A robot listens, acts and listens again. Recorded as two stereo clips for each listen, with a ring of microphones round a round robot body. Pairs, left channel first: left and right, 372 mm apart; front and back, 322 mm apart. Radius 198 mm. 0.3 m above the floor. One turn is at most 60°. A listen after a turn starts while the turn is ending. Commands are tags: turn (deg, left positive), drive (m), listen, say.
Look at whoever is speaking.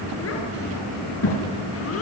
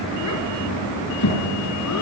<turn deg="35"/>
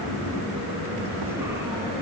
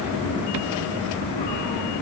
<listen/>
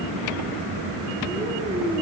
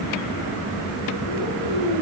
<listen/>
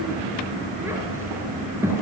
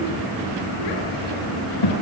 <say>Facing the child speaking, over 4 m away.</say>